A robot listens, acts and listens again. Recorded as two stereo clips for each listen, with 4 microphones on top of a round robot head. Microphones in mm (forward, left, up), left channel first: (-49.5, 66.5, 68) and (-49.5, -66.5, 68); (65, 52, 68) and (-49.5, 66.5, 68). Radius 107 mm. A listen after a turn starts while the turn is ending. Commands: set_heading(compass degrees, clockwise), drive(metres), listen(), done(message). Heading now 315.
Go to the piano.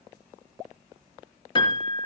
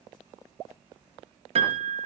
set_heading(170)
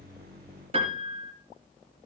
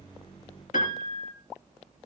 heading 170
set_heading(205)
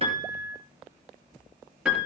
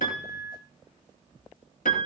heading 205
drive(1.0)
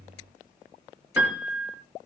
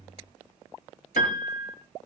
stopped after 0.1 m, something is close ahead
set_heading(215)
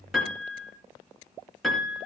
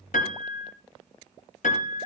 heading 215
done("Something is in my way. I am facing the piano but have not reached it.")